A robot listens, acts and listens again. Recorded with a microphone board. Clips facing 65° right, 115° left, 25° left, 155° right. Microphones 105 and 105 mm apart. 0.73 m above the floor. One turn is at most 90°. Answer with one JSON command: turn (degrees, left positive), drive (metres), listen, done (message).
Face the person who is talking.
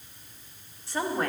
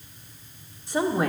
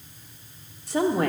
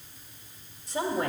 {"turn": 35}
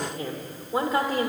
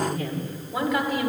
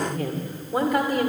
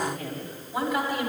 {"turn": -15}
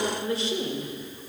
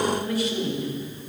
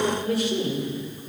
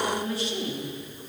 {"turn": -10}
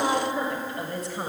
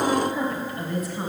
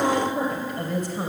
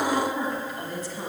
{"turn": -10}
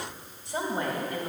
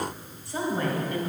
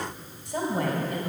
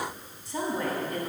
{"done": "Found it: a woman speaking, straight ahead, 2 to 4 m away."}